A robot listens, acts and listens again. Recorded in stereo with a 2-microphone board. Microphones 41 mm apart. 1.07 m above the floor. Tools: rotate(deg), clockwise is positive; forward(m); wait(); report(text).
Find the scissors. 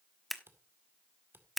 rotate(-30)
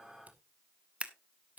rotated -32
rotate(35)
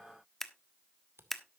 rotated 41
report("Found it: scissors, straight ahead, 1 to 2 m away.")